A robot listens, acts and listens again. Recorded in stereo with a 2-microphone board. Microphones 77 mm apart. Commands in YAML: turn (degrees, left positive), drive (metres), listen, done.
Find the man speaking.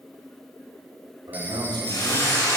turn: -90
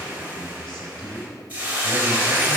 done: "Facing the man speaking, 2 to 4 m away."